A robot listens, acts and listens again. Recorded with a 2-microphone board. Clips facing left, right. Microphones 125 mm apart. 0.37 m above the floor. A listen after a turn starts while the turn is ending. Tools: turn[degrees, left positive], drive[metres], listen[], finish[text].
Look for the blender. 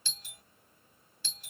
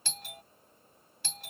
Action: listen[]
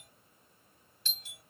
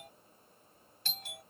Action: listen[]
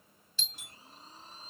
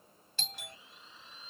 Thought: The blender: about 40° left or 140° left.
Action: turn[40]
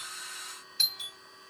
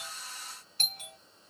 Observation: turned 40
Thought: So it is at 100° left.
Action: turn[100]
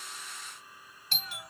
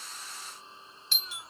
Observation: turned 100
Thought: The blender is now 25° right.
Action: turn[-25]
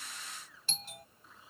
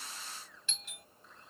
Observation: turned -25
Action: finish[Found it: a blender, straight ahead.]